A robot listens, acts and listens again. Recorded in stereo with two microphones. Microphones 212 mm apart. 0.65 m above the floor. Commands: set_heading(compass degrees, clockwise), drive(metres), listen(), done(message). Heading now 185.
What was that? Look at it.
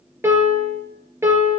set_heading(215)
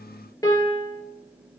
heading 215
set_heading(200)
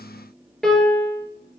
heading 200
done("Found it: a piano, straight ahead, 2 to 4 m away.")